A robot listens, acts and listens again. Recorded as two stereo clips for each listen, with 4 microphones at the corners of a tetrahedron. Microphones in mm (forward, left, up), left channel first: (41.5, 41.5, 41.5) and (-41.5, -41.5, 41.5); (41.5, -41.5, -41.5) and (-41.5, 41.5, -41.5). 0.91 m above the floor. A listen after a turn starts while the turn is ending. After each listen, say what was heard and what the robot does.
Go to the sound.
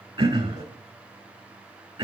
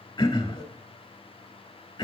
The throat clearing: 95° right. Turn 95° right.
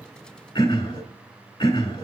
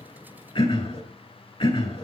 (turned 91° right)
Drive 1.0 m forward.
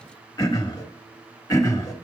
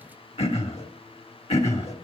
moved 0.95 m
The throat clearing is now 15° right. Turn 15° right.
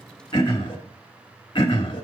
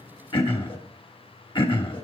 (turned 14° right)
Drive 1.0 m forward.
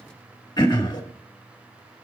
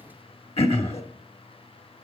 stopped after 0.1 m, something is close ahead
The throat clearing is now 10° right. Turn 10° right.
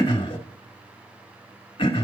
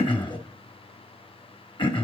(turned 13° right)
Arrived at the throat clearing, straight ahead.